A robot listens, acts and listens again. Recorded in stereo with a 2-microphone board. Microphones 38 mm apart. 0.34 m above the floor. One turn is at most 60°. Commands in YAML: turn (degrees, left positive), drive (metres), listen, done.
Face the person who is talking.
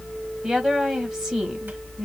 turn: -15
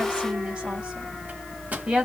turn: -60
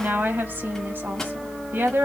turn: -60
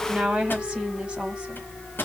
turn: -25
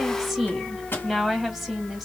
done: "Facing the woman speaking, 1 to 2 m away."